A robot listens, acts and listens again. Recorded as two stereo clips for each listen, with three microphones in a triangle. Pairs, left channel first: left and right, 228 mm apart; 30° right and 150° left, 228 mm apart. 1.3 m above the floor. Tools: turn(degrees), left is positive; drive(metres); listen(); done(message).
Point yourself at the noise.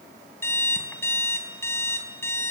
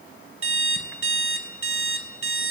turn(degrees=170)
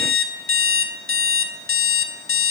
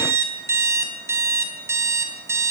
turn(degrees=70)
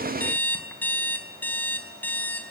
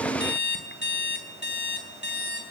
turn(degrees=10)
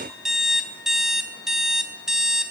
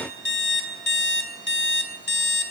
done("Facing the alarm clock, 2 to 4 m away.")